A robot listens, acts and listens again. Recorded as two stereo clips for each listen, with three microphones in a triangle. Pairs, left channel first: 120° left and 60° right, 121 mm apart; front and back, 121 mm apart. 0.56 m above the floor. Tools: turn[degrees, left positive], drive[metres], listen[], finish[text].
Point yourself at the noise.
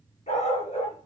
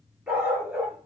Thought: The dog barking: 105° left.
Action: turn[105]
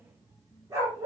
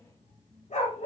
Action: finish[Found it: a dog barking, straight ahead, 2 to 4 m away.]